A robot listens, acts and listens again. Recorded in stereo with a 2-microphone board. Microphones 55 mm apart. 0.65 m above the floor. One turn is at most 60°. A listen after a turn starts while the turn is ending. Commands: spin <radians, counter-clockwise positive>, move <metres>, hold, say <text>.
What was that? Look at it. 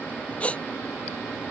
spin 0.44
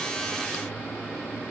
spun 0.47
hold
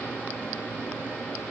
say I heard a gasp, but can't make it out now. It was about straight ahead or 130° left.